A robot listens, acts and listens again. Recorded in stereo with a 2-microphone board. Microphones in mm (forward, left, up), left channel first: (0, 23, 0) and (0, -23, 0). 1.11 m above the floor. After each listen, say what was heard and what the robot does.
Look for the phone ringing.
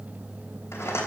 Keep listening.
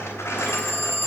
The phone ringing: about 65° right or 115° right. Turn 65° right.
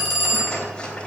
Facing the phone ringing, 2 to 4 m away.